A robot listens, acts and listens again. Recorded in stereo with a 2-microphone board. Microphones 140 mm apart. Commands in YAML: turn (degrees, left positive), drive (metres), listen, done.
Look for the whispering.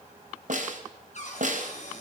listen: true
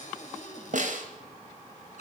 listen: true
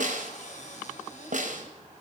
done: "I can't make out whispering to turn to."